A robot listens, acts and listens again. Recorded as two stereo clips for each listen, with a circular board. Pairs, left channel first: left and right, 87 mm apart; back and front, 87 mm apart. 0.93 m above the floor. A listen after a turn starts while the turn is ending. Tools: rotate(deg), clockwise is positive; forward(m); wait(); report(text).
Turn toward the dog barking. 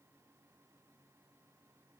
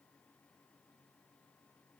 wait()
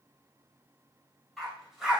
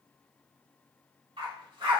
rotate(10)
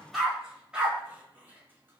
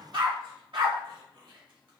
rotate(15)
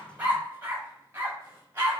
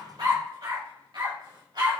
rotate(25)
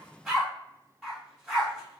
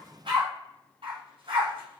report("Found it: a dog barking, straight ahead.")